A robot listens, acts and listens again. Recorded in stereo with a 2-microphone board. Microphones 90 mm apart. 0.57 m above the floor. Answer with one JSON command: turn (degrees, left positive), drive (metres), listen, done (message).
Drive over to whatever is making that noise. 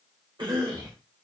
{"turn": -60}
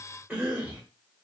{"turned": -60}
{"turn": -15}
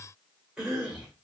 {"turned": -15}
{"drive": 1.0}
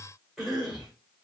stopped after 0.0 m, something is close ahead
{"done": "Blocked. The cough is further on, straight ahead."}